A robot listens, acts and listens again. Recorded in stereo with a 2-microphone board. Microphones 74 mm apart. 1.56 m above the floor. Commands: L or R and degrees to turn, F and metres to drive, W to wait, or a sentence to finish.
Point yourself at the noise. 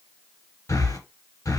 L45
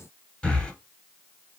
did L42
L10
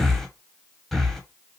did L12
Facing the breathing.